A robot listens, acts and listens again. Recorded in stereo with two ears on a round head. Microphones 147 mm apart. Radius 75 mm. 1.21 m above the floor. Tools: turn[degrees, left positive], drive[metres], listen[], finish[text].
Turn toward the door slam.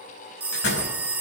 Action: turn[90]
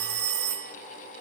Action: finish[I heard a door slam from this way, but can't make it out now.]